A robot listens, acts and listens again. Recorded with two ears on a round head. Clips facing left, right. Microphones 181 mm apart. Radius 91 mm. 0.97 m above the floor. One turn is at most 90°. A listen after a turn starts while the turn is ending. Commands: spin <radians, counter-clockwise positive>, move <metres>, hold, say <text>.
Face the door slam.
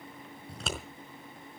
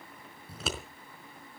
hold
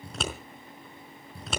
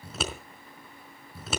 hold
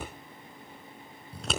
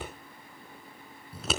say I can't make out a door slam, only scissors.